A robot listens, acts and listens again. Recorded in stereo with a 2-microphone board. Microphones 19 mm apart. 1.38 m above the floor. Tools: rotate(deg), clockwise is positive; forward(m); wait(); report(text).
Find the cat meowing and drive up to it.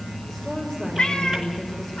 rotate(-65)
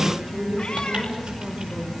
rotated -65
wait()
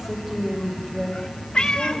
rotate(-45)
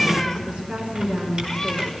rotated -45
forward(1.0)
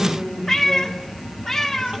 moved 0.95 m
rotate(-15)
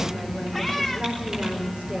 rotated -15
forward(1.0)
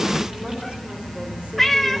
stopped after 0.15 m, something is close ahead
report("I am next to the cat meowing.")